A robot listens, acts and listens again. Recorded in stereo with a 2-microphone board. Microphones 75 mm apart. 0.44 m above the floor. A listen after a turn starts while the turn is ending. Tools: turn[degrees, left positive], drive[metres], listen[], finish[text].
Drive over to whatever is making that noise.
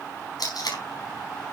Thought: The tape being pulled: about 65° left or 115° left.
Action: turn[65]
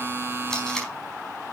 Thought: So it is at 10° left.
Action: turn[10]
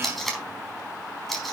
Action: drive[1.0]
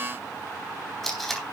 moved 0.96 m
Action: drive[1.0]
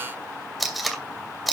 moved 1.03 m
Action: drive[1.0]
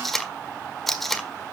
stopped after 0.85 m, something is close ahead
Action: finish[Arrived at the tape being pulled, straight ahead.]